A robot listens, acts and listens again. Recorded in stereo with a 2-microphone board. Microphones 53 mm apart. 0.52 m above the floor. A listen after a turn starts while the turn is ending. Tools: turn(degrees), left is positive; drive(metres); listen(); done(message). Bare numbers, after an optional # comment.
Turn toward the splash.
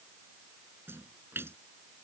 # The splash: about 45° right or 135° right.
turn(-45)
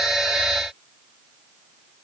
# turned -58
listen()
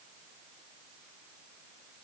done("I heard a splash, but can't make it out now. It was about 10° left or 75° right.")